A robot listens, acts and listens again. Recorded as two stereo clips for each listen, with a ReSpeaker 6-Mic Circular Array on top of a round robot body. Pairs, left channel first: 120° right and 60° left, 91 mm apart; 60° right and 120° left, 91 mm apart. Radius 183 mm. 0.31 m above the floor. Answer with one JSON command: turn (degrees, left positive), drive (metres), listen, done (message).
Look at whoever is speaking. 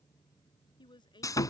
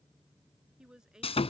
{"turn": -155}
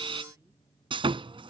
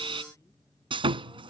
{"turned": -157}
{"listen": true}
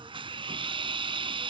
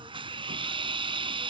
{"listen": true}
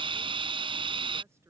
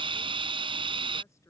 {"done": "Facing where the woman speaking came from. I can't hear it now."}